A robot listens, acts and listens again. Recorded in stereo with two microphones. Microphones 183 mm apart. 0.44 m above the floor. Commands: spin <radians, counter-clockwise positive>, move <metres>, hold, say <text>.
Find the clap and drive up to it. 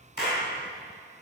spin 1.22
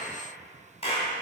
spin 0.61
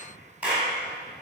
spin -0.17
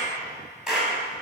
move 1.0
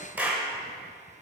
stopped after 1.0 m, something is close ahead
spin -0.17
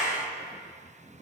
say Arrived at the clap, straight ahead.